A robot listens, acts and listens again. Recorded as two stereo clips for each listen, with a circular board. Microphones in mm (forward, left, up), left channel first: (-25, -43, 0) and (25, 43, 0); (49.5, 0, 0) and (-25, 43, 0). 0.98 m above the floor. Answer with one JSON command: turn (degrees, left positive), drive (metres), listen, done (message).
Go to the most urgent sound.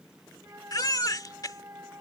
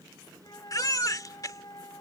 {"turn": -75}
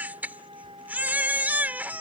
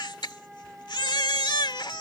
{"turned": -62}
{"turn": -10}
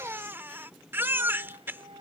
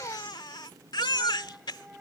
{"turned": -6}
{"drive": 1.0}
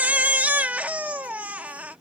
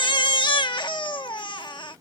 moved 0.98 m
{"turn": -15}
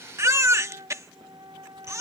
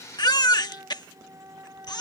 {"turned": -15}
{"drive": 1.0}
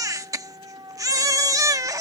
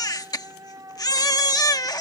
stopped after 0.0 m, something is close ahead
{"turn": 10}
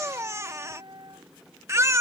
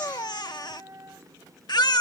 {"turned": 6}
{"done": "Arrived at the baby crying, straight ahead."}